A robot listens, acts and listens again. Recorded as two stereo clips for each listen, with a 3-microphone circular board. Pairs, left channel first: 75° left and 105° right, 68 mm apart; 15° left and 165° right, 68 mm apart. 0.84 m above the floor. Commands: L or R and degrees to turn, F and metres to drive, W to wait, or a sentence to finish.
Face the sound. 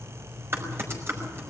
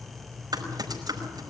R155
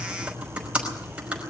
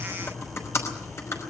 R30
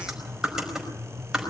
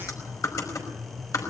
R25
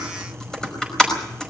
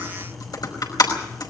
Facing the typing on a keyboard, over 4 m away.